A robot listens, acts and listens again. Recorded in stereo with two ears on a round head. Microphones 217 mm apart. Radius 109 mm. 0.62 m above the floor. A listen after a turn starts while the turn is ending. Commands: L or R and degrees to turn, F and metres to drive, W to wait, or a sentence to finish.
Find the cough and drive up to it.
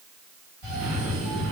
R60
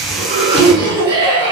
R20
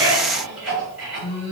F1.0
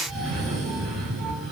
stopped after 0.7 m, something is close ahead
I am next to the cough.